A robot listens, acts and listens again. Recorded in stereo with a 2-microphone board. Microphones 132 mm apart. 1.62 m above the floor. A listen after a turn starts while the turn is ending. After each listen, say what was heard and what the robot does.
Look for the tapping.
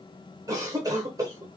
Keep listening.
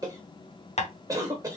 The tapping: about 60° left or 120° left. Turn 60° left.
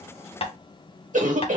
So it is at 55° left. Turn 55° left.
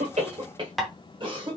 Facing the tapping, under 1 m away.